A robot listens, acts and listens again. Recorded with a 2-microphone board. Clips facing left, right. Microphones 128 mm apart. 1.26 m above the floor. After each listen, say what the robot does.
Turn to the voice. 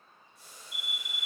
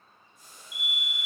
Keep listening.
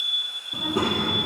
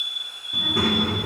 Turn 20° left.
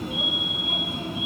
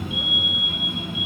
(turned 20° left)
Turn 140° left.
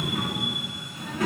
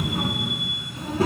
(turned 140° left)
Turn 35° right.
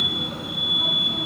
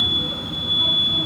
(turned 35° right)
Found it: a child speaking, straight ahead.